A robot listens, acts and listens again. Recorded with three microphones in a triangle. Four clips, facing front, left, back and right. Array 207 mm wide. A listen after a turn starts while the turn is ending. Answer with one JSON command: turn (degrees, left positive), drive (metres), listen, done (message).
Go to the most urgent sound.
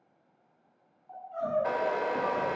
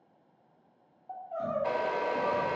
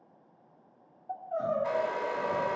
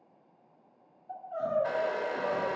{"turn": 165}
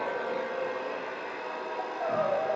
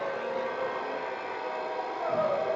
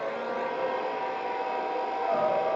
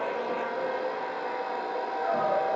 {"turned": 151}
{"turn": 15}
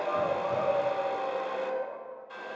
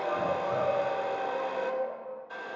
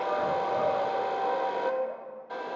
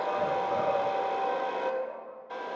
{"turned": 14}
{"drive": 1.0}
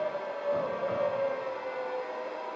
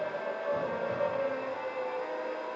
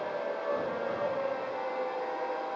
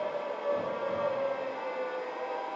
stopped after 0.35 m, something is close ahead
{"done": "Something is in my way. I am facing the crying but have not reached it."}